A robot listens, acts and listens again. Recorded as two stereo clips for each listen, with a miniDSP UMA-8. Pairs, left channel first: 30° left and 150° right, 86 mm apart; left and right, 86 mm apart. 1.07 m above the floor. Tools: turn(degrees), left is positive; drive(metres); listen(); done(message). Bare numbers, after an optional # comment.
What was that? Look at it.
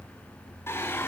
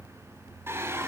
# The singing: 30° right.
turn(-30)
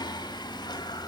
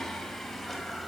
done("Found it: singing, straight ahead.")